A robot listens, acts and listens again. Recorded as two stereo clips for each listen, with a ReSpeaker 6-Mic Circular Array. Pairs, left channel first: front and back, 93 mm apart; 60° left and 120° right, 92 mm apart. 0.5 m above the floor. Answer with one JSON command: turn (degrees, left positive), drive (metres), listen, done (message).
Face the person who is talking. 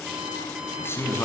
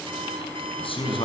{"turn": 65}
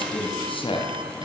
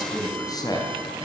{"turn": 15}
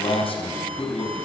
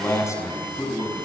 {"done": "Facing the man speaking, over 4 m away."}